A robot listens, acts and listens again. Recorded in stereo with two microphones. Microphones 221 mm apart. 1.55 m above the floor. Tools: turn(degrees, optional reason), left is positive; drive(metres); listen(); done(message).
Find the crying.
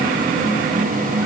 listen()
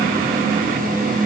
listen()
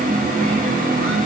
done("I can't make out crying.")